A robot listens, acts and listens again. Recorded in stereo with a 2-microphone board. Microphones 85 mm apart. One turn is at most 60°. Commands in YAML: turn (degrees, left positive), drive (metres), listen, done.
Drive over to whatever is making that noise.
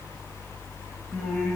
turn: 30
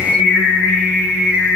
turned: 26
turn: -20
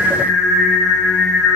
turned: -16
drive: 1.0
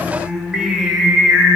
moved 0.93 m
drive: 1.0
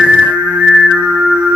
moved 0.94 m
turn: -15
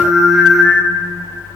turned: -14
drive: 1.0
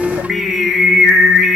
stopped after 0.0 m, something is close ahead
done: "I am next to the singing."